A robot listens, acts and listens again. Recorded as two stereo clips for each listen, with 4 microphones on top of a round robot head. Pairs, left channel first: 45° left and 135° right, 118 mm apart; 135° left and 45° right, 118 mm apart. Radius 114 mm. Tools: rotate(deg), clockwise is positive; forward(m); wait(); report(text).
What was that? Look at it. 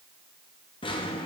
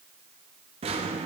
report("Found it: a drawer, straight ahead.")